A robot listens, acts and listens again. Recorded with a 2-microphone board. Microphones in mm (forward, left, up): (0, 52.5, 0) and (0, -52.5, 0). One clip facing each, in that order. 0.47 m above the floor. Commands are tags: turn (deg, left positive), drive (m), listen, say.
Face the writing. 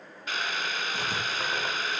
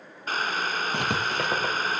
<turn deg="-65"/>
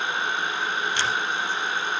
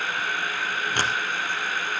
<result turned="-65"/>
<turn deg="-50"/>
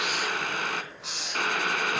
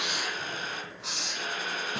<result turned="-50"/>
<say>Facing the writing, 2 to 4 m away.</say>